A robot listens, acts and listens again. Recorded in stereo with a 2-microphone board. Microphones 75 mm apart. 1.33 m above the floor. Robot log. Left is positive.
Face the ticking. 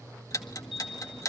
note: The ticking: about 50° left or 130° left.
cmd yaw +50
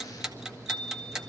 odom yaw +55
end: Facing the ticking, 1 to 2 m away.